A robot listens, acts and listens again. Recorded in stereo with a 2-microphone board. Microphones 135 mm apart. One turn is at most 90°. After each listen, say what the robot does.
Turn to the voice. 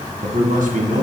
Turn 70° right.
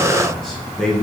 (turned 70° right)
Facing the man speaking, 2 to 4 m away.